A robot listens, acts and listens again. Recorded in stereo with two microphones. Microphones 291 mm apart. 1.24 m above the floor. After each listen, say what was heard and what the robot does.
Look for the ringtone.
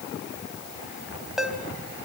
Turn 30° left.
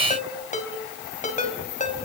So it is at 155° left. Turn 155° left.
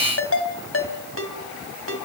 The ringtone is now 50° left. Turn 50° left.
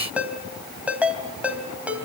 Facing the ringtone, 2 to 4 m away.